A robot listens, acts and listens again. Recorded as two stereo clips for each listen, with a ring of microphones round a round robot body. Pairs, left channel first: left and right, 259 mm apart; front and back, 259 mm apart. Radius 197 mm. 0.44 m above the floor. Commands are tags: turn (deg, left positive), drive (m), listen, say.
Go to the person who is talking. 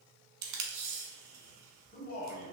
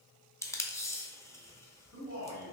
<turn deg="35"/>
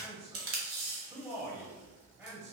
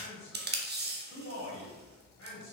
<turn deg="-10"/>
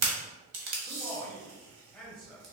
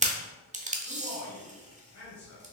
<drive m="1.0"/>
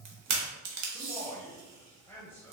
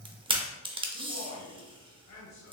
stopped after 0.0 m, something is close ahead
<turn deg="10"/>
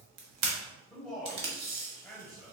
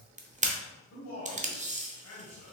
<say>Something is in my way. I am facing the man speaking but have not reached it.</say>